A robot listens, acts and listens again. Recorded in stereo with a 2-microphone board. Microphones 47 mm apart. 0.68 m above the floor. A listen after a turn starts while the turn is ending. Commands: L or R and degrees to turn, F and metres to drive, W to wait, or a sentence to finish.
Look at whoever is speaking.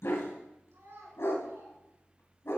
R90
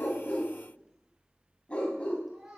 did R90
Facing the child speaking.